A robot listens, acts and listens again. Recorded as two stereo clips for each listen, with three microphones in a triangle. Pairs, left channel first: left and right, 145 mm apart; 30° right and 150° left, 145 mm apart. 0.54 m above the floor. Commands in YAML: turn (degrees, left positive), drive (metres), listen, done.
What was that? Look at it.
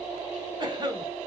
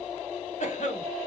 turn: -35
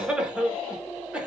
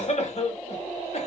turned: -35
turn: -10
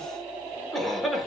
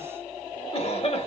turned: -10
done: "Found it: a cough, straight ahead."